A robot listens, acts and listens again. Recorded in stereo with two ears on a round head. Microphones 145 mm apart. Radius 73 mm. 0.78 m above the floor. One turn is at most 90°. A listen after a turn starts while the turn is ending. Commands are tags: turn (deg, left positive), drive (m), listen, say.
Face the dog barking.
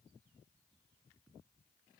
<listen/>
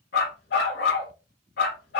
<turn deg="70"/>
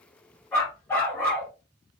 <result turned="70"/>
<turn deg="10"/>
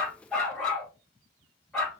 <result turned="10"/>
<say>Facing the dog barking.</say>